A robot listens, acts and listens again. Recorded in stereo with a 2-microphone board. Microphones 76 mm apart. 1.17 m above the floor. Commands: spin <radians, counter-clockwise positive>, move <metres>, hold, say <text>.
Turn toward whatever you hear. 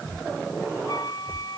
spin 1.05
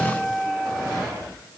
say Found it: a flute, straight ahead.